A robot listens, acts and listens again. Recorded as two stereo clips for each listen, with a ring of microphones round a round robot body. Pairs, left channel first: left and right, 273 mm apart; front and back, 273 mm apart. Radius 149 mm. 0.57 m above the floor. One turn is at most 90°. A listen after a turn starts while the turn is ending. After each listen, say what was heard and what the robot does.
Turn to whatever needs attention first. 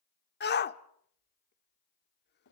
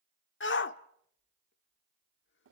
The shout: 40° left. Turn 40° left.
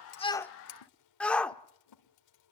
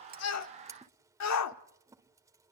Found it: a shout, straight ahead.